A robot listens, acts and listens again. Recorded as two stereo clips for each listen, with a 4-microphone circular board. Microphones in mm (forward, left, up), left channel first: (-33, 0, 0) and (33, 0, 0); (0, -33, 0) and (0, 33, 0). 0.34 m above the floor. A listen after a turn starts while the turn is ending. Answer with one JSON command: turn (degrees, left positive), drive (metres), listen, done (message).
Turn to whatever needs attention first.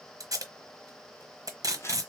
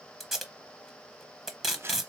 {"listen": true}
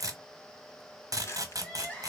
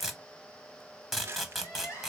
{"turn": -115}
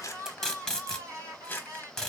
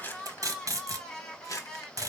{"turn": -15}
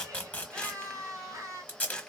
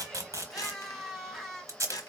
{"done": "Facing the crying."}